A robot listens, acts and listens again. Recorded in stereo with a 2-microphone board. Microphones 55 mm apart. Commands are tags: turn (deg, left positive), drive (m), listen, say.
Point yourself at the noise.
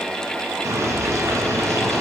<turn deg="-55"/>
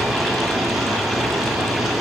<say>Found it: boiling, straight ahead, 2 to 4 m away.</say>